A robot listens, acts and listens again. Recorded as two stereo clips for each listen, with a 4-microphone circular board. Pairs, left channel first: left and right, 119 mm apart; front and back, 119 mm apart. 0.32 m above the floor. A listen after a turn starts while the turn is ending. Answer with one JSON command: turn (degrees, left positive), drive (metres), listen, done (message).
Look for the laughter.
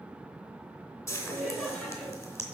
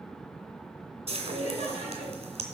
{"done": "Facing the laughter, 2 to 4 m away."}